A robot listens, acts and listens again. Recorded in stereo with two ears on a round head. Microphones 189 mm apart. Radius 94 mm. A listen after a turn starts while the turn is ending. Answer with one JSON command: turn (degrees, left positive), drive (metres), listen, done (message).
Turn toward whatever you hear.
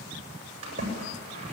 {"turn": -30}
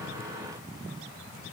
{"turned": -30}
{"listen": true}
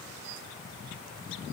{"done": "I heard a splash, but can't make it out now. It was about straight ahead or 120° right."}